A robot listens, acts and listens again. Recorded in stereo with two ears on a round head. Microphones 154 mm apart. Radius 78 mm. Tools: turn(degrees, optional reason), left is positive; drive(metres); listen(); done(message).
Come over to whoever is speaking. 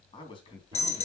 turn(degrees=30, reason="The man speaking: about 30° left or 150° left.")
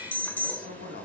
turn(degrees=115, reason="So it is at 115° left.")
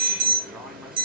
listen()
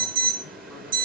listen()
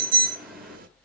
done("I heard a man speaking from this way, but can't make it out now. I did not reach it.")